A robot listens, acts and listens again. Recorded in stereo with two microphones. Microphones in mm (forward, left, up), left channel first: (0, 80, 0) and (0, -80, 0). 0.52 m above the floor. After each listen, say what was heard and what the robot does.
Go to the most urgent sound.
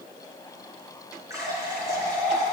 Keep listening.
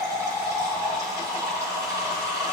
Keep listening.
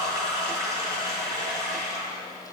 I can't make out anything urgent, only a running tap.